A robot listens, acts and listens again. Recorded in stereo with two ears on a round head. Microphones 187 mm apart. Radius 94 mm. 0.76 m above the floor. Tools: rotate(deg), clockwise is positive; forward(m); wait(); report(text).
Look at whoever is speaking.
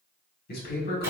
rotate(-50)
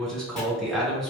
report("Found it: a man speaking, straight ahead, 1 to 2 m away.")